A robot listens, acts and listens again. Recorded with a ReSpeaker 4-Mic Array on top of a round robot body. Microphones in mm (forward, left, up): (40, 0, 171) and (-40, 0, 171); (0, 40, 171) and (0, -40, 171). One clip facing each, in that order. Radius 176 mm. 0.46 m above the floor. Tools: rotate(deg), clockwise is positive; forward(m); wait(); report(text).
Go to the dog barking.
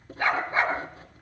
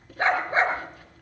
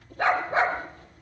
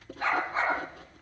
rotate(-120)
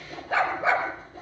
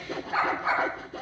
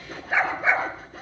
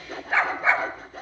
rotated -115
rotate(-10)
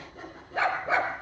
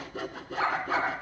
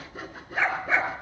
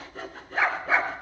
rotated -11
forward(1.0)
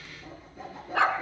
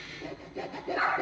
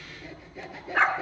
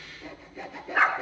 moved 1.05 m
forward(1.0)
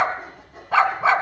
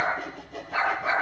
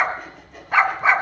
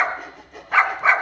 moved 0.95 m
forward(1.0)
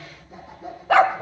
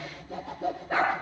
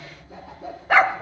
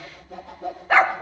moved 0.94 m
forward(1.0)
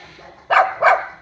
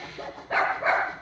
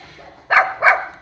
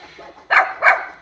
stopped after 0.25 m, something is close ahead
rotate(-10)
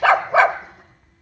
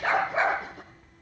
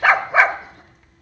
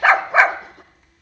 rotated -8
report("I am next to the dog barking.")